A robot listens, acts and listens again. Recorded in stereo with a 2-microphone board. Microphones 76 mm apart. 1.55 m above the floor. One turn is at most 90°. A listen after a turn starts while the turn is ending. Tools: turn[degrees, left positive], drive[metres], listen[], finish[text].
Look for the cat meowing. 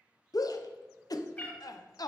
Thought: The cat meowing: about 25° left or 155° left.
Action: turn[25]
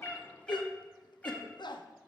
Thought: The cat meowing: about 25° left or 155° left.
Action: turn[25]
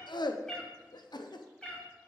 Thought: The cat meowing: about 15° left or 165° left.
Action: turn[15]
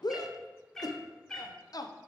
Action: turn[30]
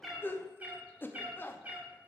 Thought: So it is at 20° right.
Action: turn[-20]
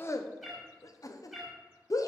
Action: finish[Facing the cat meowing.]